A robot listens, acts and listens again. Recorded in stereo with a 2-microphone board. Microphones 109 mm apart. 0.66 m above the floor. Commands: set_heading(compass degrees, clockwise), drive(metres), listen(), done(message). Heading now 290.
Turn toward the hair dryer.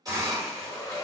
set_heading(260)
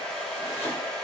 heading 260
set_heading(250)
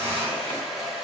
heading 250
done("Facing the hair dryer.")